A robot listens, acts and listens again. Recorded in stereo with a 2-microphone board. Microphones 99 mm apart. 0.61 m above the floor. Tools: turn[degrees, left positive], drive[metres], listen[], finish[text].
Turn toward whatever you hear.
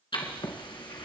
Thought: The writing: about 55° left or 125° left.
Action: turn[55]
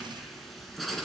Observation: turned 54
Action: finish[Facing the writing.]